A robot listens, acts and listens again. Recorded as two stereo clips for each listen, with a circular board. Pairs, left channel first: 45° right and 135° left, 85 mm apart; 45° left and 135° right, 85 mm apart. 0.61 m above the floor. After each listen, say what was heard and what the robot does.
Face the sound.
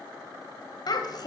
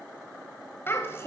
The child speaking: 15° right. Turn 15° right.
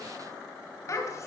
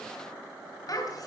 Facing the child speaking.